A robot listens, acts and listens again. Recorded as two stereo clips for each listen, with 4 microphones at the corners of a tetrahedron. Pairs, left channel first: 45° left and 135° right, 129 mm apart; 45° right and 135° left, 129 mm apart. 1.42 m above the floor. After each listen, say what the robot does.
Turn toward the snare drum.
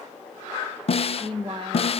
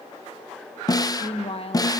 Turn 15° left.
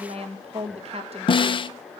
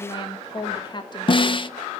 Facing the snare drum.